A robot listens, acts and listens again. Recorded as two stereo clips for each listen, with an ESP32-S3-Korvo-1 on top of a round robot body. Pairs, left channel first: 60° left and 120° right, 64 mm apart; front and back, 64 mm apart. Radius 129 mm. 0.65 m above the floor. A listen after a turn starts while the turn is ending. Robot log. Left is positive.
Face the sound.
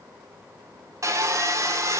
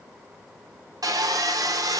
note: The sawing: 160° right.
cmd yaw -160
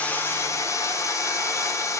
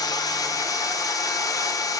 note: The sawing is now 20° left.
cmd yaw +20
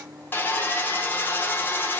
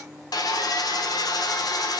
end: Facing the sawing.